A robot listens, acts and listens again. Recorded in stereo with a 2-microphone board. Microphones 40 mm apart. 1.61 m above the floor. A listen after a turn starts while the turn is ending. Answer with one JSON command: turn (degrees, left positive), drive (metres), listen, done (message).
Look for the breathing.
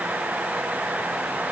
{"listen": true}
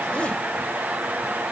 {"listen": true}
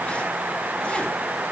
{"done": "I can't make out breathing."}